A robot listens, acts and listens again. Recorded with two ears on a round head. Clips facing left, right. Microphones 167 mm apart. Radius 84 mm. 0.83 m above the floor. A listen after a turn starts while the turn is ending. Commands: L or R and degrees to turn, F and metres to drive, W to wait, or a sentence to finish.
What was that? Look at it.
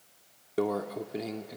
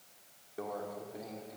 L90
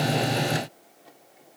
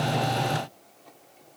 W
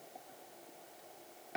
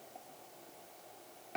W
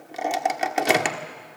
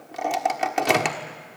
Found it: a microwave, straight ahead, 1 to 2 m away.